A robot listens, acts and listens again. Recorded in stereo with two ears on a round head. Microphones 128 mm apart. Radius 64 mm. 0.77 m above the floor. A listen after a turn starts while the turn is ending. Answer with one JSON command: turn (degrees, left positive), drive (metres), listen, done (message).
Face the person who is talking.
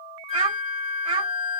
{"turn": -35}
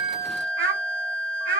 {"turn": -105}
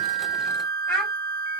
{"done": "Facing the child speaking."}